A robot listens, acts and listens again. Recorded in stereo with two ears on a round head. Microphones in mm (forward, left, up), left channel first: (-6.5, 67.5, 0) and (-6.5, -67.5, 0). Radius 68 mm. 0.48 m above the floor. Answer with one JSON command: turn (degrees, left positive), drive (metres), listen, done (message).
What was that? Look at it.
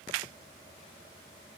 {"listen": true}
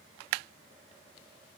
{"listen": true}
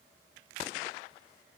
{"done": "I can't make out anything to turn to."}